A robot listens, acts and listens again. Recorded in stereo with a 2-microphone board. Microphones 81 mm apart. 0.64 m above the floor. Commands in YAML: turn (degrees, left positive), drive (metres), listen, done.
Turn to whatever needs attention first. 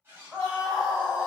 turn: -15
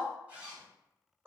turn: -155
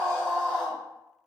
turn: 10
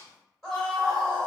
done: "Found it: a scream, straight ahead."